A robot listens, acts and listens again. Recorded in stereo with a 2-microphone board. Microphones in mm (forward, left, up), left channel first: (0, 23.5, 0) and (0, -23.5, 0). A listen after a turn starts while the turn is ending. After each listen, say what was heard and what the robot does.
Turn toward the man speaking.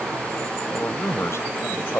The man speaking: about 70° left or 110° left. Turn 70° left.
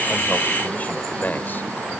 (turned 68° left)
So it is at 45° left. Turn 45° left.
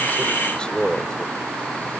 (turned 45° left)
The man speaking is now 25° left. Turn 25° left.
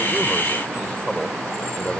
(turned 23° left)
The man speaking is now 20° left. Turn 20° left.
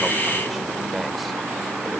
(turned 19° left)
Keep listening.
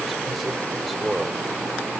Facing the man speaking.